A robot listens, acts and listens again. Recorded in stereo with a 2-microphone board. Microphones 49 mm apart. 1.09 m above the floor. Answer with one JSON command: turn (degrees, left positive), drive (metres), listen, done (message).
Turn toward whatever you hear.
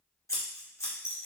{"turn": 90}
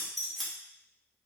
{"done": "Facing the scissors, 1 to 2 m away."}